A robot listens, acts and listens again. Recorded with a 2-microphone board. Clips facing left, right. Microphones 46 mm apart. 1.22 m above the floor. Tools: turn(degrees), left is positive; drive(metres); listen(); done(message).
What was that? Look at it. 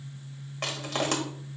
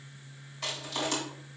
turn(degrees=55)
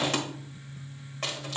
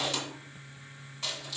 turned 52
turn(degrees=60)
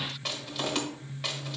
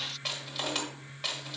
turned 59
done("Found it: crushing, straight ahead, 1 to 2 m away.")